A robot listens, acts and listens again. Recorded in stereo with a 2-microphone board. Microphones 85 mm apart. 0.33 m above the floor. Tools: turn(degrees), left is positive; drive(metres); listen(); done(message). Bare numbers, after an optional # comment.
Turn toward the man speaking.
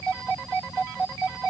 listen()
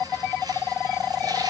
listen()
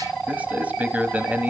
# The man speaking: about 15° right or 165° right.
turn(-15)
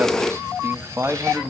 # So it is at 150° right.
turn(-150)
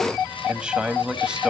# The man speaking is now 15° right.
turn(-15)
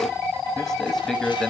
done("Found it: a man speaking, straight ahead.")